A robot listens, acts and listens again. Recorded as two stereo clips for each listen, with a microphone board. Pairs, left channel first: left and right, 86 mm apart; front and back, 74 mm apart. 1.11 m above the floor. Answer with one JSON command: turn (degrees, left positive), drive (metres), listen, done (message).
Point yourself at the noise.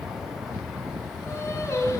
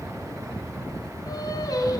{"turn": 35}
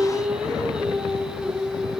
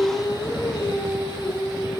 {"done": "Facing the singing, over 4 m away."}